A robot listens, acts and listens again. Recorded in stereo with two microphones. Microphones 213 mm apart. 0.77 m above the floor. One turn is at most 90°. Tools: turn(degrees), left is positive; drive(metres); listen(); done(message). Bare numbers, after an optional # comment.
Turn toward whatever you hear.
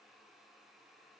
listen()
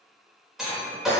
turn(30)
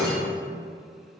# So it is at 155° left.
turn(90)
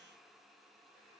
# Nothing new. It was at 65° left.
turn(65)
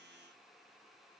done("I heard breaking glass from this way, but can't make it out now.")